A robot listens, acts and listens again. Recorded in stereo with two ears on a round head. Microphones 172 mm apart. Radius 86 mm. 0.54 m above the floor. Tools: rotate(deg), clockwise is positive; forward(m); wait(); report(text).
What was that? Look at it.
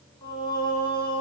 rotate(-30)
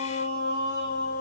rotate(-115)
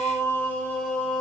rotate(-10)
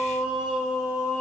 report("Facing the singing.")